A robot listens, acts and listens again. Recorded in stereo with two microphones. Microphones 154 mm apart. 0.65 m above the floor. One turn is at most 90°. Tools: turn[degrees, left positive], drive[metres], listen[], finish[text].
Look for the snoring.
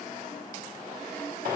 Action: listen[]
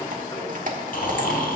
Thought: The snoring: about 75° left or 105° left.
Action: turn[75]
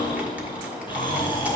Thought: So it is at 30° left.
Action: turn[30]
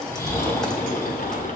Thought: The snoring is now 15° left.
Action: turn[15]
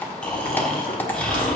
Action: finish[Found it: snoring, straight ahead, 2 to 4 m away.]